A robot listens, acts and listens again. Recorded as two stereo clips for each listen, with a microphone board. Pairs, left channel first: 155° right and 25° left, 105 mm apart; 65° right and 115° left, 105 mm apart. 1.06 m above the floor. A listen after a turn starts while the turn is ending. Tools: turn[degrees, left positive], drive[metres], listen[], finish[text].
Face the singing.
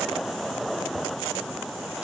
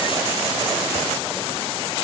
Action: listen[]
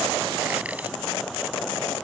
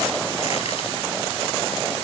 Action: listen[]
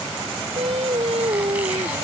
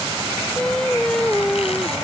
Thought: The singing: 20° left.
Action: turn[20]
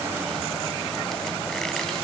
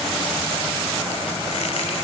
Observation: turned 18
Action: listen[]
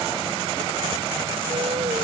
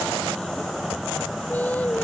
Action: listen[]
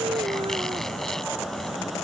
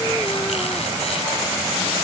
Action: finish[Facing where the singing came from. I can't hear it now.]